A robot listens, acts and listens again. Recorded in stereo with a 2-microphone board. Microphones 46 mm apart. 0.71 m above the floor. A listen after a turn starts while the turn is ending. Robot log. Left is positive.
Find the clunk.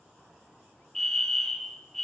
cmd idle
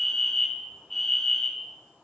cmd idle
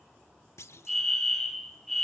cmd yaw +90
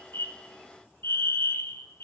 end: Facing where the clunk came from. I can't hear it now.